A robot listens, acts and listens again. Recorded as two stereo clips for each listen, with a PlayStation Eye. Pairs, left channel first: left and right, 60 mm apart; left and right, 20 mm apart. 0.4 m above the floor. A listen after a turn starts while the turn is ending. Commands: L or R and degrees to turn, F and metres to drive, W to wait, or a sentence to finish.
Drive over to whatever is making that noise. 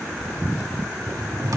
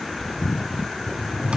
R70
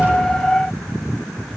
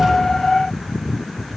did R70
F1.0
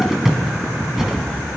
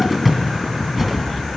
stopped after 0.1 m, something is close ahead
Blocked. The cupboard door is further on, straight ahead.